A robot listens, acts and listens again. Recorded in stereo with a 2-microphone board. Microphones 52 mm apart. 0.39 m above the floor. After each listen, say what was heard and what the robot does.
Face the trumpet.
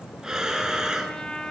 Turn 30° left.
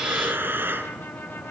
Keep listening.
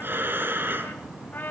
So it is at 135° left. Turn 135° left.
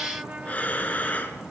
The trumpet is now 30° right. Turn 30° right.
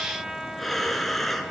Facing the trumpet, 1 to 2 m away.